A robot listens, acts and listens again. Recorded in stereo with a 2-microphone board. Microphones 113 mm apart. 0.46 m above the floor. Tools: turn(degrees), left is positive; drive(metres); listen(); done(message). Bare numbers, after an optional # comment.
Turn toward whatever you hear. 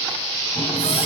# The running tap: about 65° left or 115° left.
turn(65)
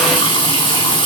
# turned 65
# So it is at 45° left.
turn(45)
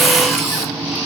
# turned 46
done("Found it: a running tap, straight ahead.")